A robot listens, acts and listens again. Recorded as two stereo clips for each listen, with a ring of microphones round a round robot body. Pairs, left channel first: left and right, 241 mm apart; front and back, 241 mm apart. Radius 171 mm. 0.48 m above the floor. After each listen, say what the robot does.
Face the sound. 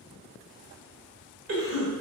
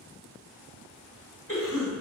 Turn 70° right.
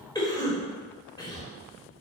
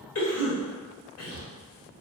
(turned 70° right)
Turn 15° left.
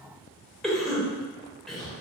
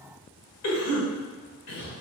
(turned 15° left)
Found it: a cough, straight ahead.